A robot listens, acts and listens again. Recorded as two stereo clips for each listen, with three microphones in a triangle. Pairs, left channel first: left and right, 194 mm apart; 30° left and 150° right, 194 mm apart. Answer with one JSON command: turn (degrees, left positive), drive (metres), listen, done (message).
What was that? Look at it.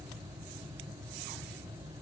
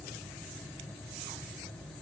{"listen": true}
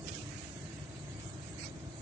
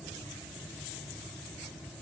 {"listen": true}
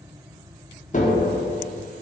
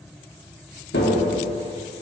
{"turn": 40}
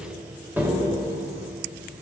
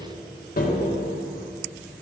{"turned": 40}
{"turn": -10}
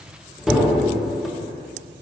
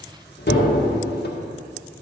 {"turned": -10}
{"done": "Facing the tapping."}